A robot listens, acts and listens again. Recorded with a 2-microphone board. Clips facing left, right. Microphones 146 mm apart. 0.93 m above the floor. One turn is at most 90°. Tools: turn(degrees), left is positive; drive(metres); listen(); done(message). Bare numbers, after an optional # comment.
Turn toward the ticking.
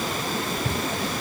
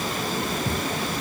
# The ticking: about 70° left or 110° left.
turn(70)
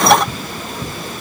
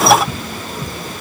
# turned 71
done("Found it: ticking, straight ahead, over 4 m away.")